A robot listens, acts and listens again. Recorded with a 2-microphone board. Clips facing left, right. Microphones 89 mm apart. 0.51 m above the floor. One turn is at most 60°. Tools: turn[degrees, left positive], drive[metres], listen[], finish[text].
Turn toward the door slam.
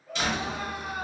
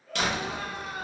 Thought: The door slam: about 60° right or 120° right.
Action: turn[-60]
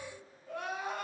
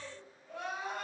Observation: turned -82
Action: listen[]
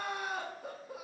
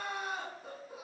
Action: finish[I heard a door slam, but can't make it out now. It was about 20° left or 35° right.]